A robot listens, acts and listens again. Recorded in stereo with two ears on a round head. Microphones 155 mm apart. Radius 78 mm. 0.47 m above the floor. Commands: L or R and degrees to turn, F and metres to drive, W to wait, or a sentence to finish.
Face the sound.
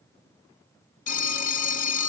L45
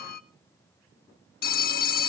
L75
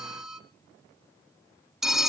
Found it: a phone ringing, straight ahead.